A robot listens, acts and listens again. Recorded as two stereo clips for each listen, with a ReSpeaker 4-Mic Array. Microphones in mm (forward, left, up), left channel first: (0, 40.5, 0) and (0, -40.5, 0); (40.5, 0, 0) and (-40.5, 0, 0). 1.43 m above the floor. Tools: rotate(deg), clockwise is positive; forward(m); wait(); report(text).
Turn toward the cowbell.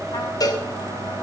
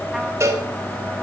rotate(-130)
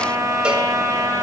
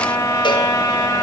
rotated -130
wait()
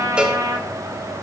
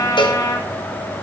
rotate(15)
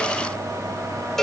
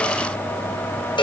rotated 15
report("Facing the cowbell, 1 to 2 m away.")